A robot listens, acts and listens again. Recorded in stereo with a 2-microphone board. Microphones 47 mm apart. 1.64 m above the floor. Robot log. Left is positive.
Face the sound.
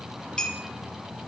note: The clink: about 20° left or 160° left.
cmd yaw +20
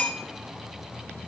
note: So it is at 135° left.
cmd yaw +135
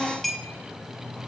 end: Facing the clink.